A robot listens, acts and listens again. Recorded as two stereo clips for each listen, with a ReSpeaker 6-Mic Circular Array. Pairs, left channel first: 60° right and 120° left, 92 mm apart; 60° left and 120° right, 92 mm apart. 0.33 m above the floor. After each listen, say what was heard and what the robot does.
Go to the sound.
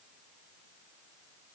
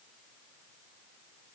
Keep listening.
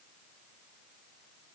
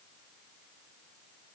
Keep listening.
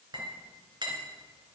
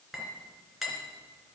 The clink: 155° left. Turn 155° left.
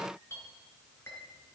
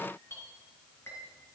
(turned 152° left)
Drive 1.0 m forward.
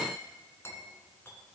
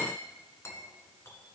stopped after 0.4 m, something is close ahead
Something is in my way. I am facing the clink but have not reached it.